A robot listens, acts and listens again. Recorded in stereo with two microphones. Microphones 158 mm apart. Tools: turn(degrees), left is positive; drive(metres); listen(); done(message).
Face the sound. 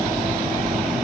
listen()
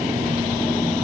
listen()
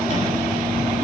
done("I can't make out anything.")